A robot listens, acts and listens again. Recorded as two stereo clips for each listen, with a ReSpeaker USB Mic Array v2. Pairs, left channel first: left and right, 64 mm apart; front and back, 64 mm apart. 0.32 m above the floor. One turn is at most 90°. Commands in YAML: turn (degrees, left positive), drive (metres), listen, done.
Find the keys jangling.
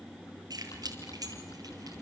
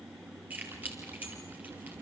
turn: -90
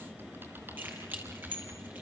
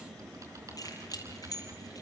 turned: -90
turn: -30
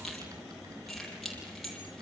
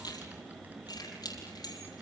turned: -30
done: "Found it: keys jangling, straight ahead, over 4 m away."